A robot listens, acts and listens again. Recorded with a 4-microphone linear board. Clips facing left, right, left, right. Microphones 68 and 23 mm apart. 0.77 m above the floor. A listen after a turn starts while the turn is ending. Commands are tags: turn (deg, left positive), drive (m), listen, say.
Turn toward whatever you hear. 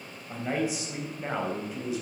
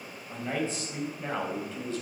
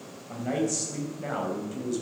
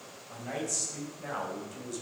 <turn deg="30"/>
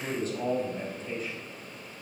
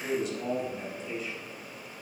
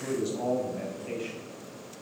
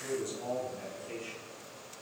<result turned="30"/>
<turn deg="140"/>
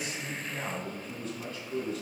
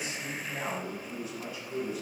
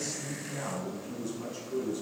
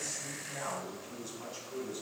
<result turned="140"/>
<turn deg="-10"/>
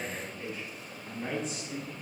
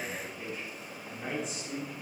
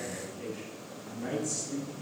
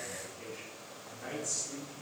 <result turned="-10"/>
<say>Found it: a man speaking, straight ahead.</say>